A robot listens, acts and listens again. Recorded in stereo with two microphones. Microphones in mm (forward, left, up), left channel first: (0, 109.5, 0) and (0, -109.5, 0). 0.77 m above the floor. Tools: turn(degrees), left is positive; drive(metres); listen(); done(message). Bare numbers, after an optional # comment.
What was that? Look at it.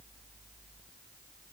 listen()
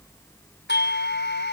# The doorbell: about 60° left or 120° left.
turn(60)
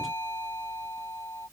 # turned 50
# So it is at 10° left.
turn(10)
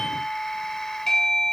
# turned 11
done("Facing the doorbell.")